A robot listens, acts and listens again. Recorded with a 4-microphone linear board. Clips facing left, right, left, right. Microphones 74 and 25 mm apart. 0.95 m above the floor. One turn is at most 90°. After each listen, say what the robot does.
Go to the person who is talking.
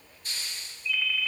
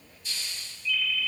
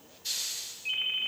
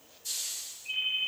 Keep listening.
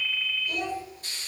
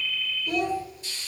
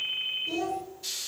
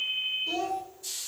Turn 60° right.
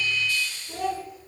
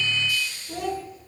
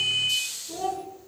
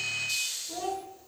Drive 1.0 m forward.
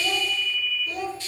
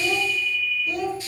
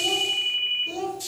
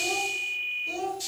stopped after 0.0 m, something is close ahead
Something is in my way. I am facing the child speaking but have not reached it.